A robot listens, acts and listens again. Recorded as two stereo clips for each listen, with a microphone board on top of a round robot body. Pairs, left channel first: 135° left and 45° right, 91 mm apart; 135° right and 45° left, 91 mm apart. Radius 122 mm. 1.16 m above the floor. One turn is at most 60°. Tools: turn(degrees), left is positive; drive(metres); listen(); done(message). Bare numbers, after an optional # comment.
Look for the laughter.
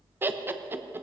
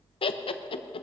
# The laughter: 115° right.
turn(-60)
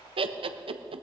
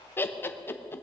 # The laughter is now 70° right.
turn(-60)
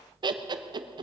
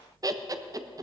done("Facing the laughter, 1 to 2 m away.")